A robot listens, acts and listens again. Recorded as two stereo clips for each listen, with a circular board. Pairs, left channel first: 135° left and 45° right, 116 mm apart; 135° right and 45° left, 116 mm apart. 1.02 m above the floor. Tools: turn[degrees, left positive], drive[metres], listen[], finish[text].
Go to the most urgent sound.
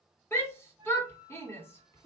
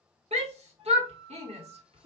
Thought: The shout: 65° left.
Action: turn[65]
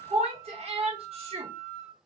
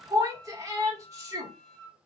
Thought: The shout is now 15° right.
Action: turn[-15]
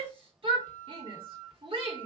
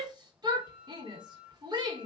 Action: drive[1.0]
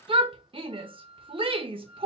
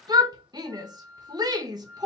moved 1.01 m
Thought: The shout is now 10° right.
Action: turn[-10]
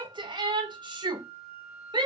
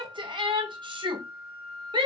Action: drive[1.0]
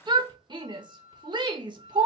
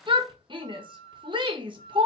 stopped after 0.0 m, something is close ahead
Action: finish[I am next to the shout.]